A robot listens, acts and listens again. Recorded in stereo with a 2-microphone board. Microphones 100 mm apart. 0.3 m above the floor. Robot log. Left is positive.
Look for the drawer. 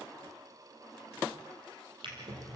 note: The drawer: about 55° right or 125° right.
cmd yaw -55
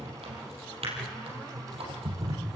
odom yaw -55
note: So it is at 70° right.
cmd yaw -70
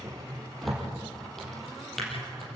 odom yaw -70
end: Facing the drawer.